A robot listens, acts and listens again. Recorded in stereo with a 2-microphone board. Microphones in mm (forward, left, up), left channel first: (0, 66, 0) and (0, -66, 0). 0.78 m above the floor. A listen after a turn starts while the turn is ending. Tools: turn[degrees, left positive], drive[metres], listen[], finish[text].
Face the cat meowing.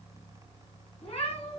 Thought: The cat meowing: about 55° left or 125° left.
Action: turn[55]
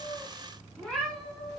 Thought: So it is at 10° left.
Action: turn[10]
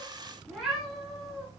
Action: finish[Found it: a cat meowing, straight ahead, 2 to 4 m away.]